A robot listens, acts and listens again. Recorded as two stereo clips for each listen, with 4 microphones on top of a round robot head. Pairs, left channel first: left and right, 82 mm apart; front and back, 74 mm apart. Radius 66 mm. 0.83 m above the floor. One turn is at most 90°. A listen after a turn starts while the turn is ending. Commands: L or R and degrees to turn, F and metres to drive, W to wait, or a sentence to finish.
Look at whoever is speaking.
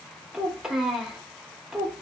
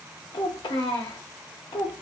Found it: a child speaking, straight ahead.